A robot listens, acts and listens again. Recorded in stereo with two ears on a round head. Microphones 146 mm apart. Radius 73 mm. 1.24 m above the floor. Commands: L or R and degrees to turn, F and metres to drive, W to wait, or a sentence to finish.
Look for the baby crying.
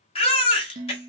L35
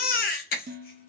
L105
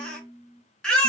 Facing the baby crying.